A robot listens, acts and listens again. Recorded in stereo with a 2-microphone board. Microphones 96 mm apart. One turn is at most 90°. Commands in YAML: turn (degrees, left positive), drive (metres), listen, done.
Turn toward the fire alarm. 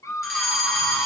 turn: -30
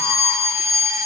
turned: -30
turn: -90
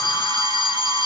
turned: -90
turn: -55
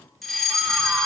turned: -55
done: "Facing the fire alarm, 2 to 4 m away."